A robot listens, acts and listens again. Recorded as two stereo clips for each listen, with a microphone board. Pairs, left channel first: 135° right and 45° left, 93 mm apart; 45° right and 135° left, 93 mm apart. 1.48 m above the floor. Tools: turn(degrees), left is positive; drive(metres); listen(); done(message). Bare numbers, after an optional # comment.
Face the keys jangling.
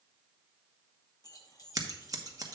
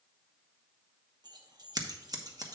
# The keys jangling: 175° left.
turn(175)
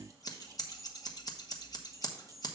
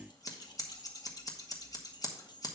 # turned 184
# The keys jangling is now 10° right.
turn(-10)
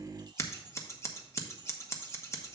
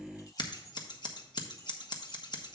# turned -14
listen()
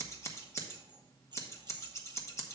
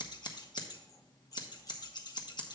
done("Found it: keys jangling, straight ahead, 1 to 2 m away.")